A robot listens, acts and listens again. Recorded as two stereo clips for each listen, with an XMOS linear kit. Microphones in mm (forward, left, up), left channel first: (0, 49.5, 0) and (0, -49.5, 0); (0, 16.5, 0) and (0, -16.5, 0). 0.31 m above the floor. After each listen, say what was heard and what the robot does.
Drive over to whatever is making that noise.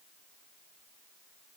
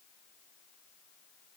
Keep listening.
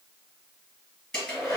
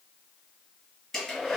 Turn 30° left.
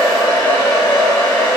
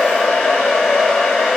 So it is at 145° left. Turn 145° left.
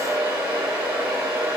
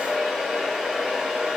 The hair dryer is now 15° right. Turn 15° right.
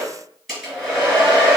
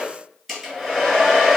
Drive 1.0 m forward.
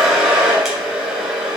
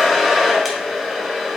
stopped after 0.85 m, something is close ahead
I am next to the hair dryer.